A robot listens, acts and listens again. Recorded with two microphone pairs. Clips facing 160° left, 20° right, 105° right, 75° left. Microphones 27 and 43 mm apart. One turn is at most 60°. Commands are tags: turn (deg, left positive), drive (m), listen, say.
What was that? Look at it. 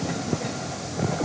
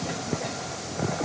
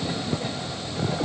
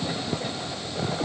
<listen/>
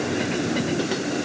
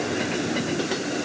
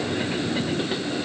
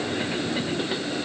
<listen/>
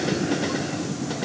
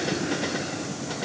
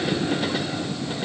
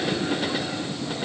<say>I can't make out anything to turn to.</say>